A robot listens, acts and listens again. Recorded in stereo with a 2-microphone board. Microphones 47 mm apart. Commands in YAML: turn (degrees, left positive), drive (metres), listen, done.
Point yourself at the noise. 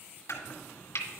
turn: 90
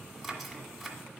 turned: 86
done: "Facing the chopping, 1 to 2 m away."